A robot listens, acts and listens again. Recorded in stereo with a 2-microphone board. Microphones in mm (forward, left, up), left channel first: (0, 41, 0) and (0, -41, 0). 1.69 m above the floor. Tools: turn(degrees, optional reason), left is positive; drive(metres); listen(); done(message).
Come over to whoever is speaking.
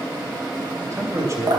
turn(degrees=-40, reason="The man speaking: about 40° right or 140° right.")
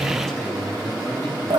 listen()
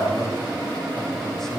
listen()
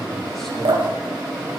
done("I heard a man speaking, but can't make it out now. It was about straight ahead or 100° right. I did not reach it.")